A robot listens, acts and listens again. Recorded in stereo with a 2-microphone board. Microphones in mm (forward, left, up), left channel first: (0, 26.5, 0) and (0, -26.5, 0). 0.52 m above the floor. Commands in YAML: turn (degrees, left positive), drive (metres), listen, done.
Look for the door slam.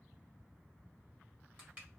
listen: true
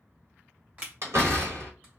turn: -65
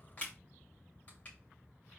listen: true
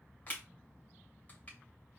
done: "I heard a door slam, but can't make it out now. It was about straight ahead or 50° right."